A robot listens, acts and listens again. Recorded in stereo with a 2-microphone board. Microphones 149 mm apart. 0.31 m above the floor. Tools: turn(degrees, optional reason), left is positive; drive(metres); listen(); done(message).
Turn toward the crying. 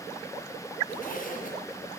listen()
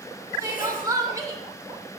turn(degrees=-20, reason="The crying: about 20° right or 160° right.")
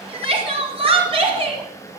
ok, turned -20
turn(degrees=-140, reason="So it is at 140° right.")
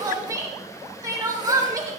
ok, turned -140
turn(degrees=-25, reason="The crying is now 25° right.")
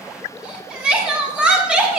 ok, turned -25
turn(degrees=-10, reason="The crying is now 10° right.")
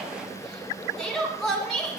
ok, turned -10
done("Found it: crying, straight ahead, 2 to 4 m away.")